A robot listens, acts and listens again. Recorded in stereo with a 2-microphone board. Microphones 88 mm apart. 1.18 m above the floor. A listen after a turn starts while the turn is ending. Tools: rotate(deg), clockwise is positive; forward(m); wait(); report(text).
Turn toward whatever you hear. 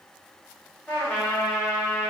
rotate(-20)
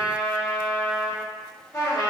rotate(-140)
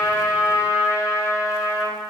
rotate(10)
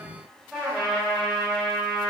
report("Facing the trumpet, 1 to 2 m away.")